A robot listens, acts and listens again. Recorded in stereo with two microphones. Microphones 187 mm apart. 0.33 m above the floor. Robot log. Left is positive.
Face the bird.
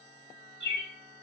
note: The bird: about 70° left or 110° left.
cmd yaw +70
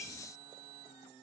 cmd idle
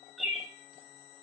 end: Facing the bird, under 1 m away.